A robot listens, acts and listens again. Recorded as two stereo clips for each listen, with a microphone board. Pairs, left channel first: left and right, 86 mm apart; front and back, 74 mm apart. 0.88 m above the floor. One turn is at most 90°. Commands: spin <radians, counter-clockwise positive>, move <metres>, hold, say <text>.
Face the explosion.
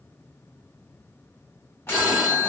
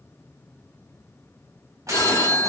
spin 1.57
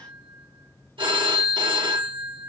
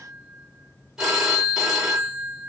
spin 0.96
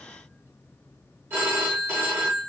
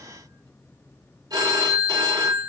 say I heard an explosion from this way, but can't make it out now.